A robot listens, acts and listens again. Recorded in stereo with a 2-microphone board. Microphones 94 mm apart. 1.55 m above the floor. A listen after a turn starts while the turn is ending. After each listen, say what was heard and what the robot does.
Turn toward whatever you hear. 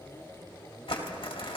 The crumpling: about 70° left or 110° left. Turn 70° left.
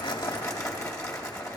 So it is at 35° left. Turn 35° left.
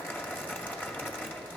The crumpling is now 20° left. Turn 20° left.
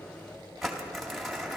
Found it: crumpling, straight ahead.